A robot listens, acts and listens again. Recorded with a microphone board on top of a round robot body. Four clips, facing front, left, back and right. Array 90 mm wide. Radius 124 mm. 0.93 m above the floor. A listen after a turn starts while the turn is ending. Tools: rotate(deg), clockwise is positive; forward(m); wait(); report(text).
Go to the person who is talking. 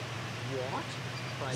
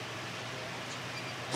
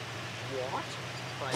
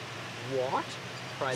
rotate(95)
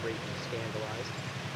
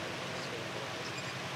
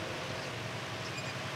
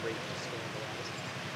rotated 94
wait()
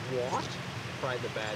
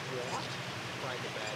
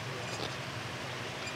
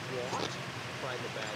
forward(1.0)
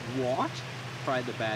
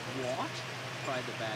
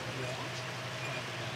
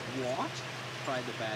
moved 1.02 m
forward(1.0)
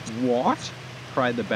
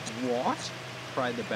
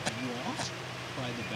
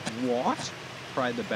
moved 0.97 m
forward(1.0)
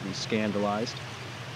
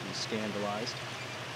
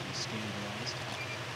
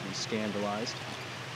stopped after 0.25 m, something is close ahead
report("Arrived at the man speaking, straight ahead.")